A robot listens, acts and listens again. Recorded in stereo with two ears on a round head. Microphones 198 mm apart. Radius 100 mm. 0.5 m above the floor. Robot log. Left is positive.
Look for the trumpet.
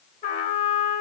note: The trumpet: about 35° left or 145° left.
cmd yaw +35
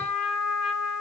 end: Facing the trumpet.